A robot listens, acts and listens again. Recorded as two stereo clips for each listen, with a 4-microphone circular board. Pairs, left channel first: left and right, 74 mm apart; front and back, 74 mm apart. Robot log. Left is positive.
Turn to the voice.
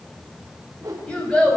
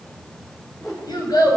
note: The child speaking: 15° left.
cmd yaw +15
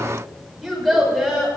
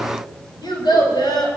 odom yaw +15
end: Facing the child speaking, over 4 m away.